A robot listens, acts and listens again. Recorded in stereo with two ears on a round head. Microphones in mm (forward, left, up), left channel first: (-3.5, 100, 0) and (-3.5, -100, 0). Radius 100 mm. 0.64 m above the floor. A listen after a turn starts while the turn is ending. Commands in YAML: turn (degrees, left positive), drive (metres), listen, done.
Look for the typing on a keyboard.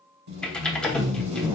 turn: 30
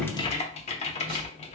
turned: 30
turn: 145
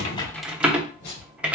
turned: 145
done: "Found it: typing on a keyboard, straight ahead, under 1 m away."